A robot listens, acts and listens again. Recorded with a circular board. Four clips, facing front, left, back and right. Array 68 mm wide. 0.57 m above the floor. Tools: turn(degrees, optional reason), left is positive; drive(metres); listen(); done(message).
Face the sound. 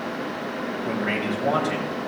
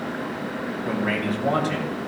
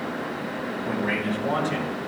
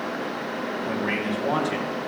turn(degrees=45, reason="The man speaking: 45° left.")
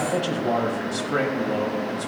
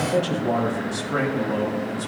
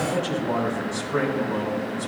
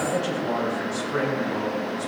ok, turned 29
turn(degrees=35, reason="The man speaking is now 35° left.")
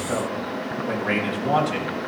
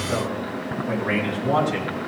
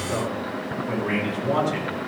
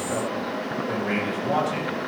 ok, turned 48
done("Facing the man speaking.")